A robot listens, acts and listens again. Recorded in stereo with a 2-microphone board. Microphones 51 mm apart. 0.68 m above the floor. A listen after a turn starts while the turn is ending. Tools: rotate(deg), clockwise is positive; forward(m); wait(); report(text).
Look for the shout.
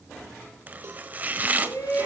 rotate(-75)
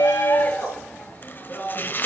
rotate(-35)
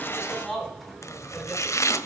report("Facing the shout.")